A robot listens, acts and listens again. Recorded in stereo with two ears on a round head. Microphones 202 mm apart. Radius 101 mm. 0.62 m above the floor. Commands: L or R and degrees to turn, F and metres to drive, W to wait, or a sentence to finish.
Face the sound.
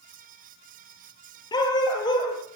L20
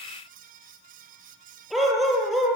L30
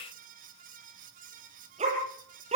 R30
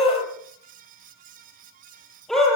Facing the dog barking, over 4 m away.